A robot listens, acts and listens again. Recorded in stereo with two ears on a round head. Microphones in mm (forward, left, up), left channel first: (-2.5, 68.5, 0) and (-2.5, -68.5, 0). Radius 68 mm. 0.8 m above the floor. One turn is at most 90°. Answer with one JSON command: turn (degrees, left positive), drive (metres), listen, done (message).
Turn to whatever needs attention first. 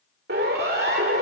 {"turn": -75}
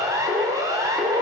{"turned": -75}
{"turn": -25}
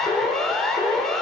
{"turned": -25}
{"done": "Facing the siren."}